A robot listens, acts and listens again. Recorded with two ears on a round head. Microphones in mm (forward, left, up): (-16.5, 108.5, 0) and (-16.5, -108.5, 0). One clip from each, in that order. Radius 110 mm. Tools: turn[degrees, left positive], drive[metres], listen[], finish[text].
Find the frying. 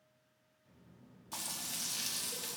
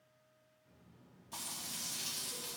Thought: The frying: about 25° left or 155° left.
Action: turn[25]
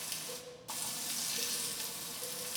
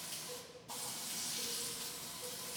Thought: So it is at 130° left.
Action: turn[130]
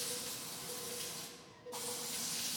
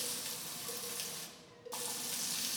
Thought: The frying is now 45° right.
Action: turn[-45]
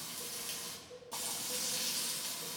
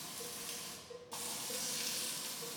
Action: finish[Found it: frying, straight ahead.]